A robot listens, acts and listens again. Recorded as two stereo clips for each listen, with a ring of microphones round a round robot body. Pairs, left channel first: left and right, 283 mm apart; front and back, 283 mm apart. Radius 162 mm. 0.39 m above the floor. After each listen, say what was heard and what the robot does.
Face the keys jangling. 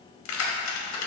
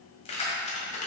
The keys jangling: 65° left. Turn 65° left.
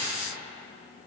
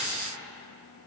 Keep listening.
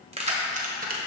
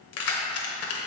The keys jangling is now 35° right. Turn 35° right.
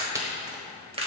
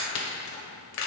The keys jangling is now 25° right. Turn 25° right.
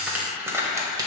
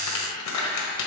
The keys jangling is now 15° right. Turn 15° right.
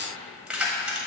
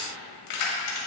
Facing the keys jangling.